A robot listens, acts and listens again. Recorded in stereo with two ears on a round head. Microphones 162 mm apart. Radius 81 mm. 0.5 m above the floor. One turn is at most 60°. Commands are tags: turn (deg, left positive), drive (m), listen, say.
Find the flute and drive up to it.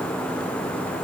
<listen/>
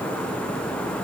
<listen/>
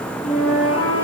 <turn deg="35"/>
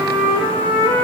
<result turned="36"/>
<turn deg="60"/>
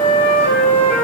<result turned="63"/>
<turn deg="45"/>
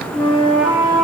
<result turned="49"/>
<drive m="1.0"/>
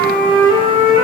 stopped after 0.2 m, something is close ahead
<say>Blocked. The flute is further on, straight ahead.</say>